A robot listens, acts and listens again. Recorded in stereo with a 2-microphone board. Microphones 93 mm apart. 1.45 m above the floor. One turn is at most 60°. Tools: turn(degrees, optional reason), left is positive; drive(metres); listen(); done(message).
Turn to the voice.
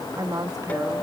turn(degrees=-40, reason="The woman speaking: about 40° right or 140° right.")
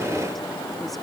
listen()
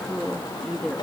done("Found it: a woman speaking, straight ahead.")